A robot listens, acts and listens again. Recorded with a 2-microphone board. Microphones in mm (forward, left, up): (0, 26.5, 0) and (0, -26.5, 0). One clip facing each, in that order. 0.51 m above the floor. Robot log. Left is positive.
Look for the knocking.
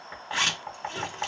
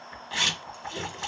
note: The knocking: about 60° left or 120° left.
cmd yaw +60
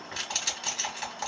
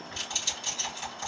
note: So it is at 40° left.
cmd yaw +40
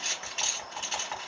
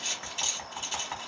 note: The knocking is now 10° left.
cmd yaw +10
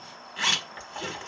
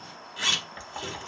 end: Facing the knocking, under 1 m away.